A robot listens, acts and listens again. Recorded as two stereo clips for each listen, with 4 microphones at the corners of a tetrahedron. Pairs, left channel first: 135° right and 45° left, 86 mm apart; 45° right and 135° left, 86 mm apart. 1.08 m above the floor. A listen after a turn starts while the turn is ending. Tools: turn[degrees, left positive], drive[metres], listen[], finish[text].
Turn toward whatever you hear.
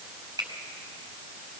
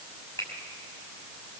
Action: finish[Facing the finger snap.]